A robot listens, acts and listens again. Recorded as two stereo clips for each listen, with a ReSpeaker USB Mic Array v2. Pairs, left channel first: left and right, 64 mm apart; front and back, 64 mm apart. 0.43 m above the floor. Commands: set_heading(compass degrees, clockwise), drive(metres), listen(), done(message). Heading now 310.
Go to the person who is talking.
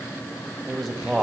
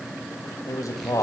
drive(1.0)
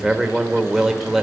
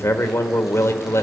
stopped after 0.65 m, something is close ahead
done("I am next to the man speaking.")